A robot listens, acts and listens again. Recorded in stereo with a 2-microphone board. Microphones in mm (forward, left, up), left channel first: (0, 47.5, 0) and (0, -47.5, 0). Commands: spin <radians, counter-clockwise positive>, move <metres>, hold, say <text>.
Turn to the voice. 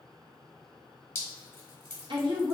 spin -0.96
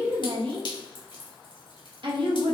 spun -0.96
spin -1.13
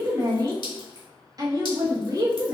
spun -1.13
spin -0.70
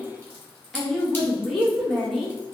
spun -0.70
say Found it: a woman speaking, straight ahead, 1 to 2 m away.